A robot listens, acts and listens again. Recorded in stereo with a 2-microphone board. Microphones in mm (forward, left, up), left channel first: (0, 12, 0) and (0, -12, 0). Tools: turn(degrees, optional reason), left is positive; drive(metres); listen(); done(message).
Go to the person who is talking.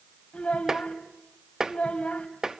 turn(degrees=70, reason="The child speaking: about 70° left or 110° left.")
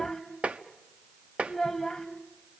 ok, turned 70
drive(metres=1.0)
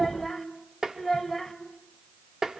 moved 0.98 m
drive(metres=1.0)
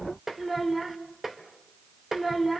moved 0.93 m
drive(metres=1.0)
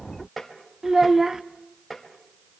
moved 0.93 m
turn(degrees=-20, reason="The child speaking is now 20° right.")
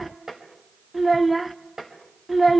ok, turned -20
drive(metres=1.0)
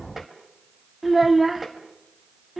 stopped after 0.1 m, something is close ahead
turn(degrees=-10, reason="The child speaking is now 10° right.")
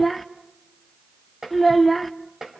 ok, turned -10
done("Arrived at the child speaking, straight ahead.")